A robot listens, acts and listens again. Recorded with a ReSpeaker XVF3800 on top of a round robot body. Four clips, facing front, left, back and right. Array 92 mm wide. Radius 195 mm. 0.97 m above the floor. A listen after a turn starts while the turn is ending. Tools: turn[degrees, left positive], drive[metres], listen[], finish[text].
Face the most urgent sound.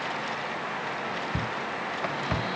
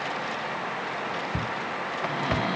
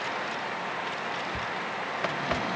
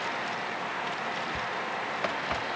Thought: The shout: 50° left.
Action: turn[50]
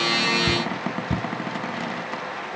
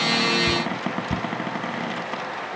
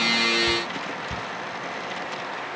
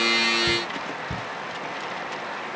Action: finish[Facing the shout.]